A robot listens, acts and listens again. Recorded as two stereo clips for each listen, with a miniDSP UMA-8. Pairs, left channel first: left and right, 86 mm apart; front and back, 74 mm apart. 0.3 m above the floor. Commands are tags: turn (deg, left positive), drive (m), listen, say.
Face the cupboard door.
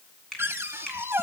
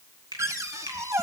<turn deg="-145"/>
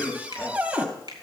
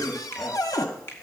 <turn deg="-20"/>
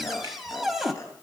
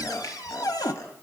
<say>Facing the cupboard door.</say>